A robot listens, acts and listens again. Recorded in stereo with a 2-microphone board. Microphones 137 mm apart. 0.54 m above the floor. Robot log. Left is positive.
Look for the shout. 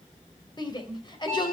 note: The shout: about 35° left or 145° left.
cmd yaw +35
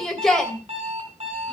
end: Found it: a shout, straight ahead, 2 to 4 m away.